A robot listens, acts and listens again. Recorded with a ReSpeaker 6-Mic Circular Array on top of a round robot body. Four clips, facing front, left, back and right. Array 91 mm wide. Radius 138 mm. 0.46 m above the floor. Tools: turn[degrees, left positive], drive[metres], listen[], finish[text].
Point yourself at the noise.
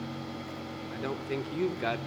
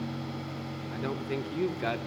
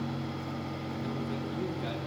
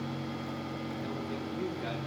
Thought: The man speaking: 35° left.
Action: turn[35]
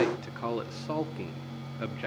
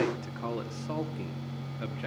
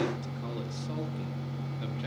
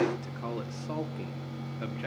Thought: The man speaking is now 10° right.
Action: turn[-10]
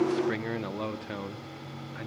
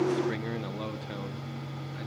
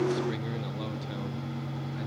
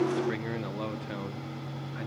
Thought: The man speaking is now 25° right.
Action: turn[-25]
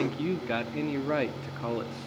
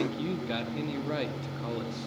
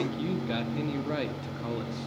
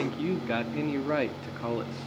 Thought: The man speaking is now 50° right.
Action: turn[-50]
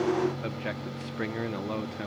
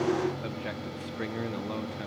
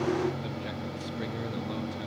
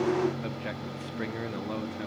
Thought: The man speaking is now 10° right.
Action: turn[-10]
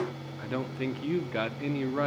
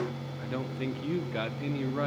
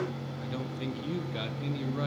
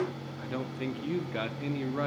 Action: finish[Facing the man speaking.]